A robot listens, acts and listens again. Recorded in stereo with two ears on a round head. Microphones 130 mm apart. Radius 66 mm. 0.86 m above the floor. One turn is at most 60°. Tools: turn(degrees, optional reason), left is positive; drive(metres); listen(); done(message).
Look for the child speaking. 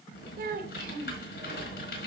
turn(degrees=-60, reason="The child speaking: about 70° right or 110° right.")
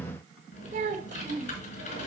turn(degrees=-50, reason="So it is at 50° right.")
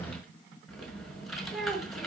done("Found it: a child speaking, straight ahead, 2 to 4 m away.")